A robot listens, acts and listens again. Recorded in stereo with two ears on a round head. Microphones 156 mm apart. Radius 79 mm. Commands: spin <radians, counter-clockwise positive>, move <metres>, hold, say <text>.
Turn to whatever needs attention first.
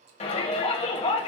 spin 0.61
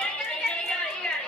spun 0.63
spin 0.17
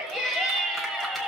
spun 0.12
say Facing the shout.